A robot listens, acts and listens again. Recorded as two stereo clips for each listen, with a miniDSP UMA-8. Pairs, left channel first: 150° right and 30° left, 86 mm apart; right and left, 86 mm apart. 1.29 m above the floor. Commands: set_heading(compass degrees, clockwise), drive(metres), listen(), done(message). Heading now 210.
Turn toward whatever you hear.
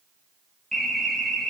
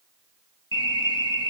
set_heading(275)
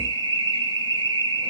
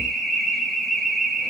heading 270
done("Found it: an alarm, straight ahead.")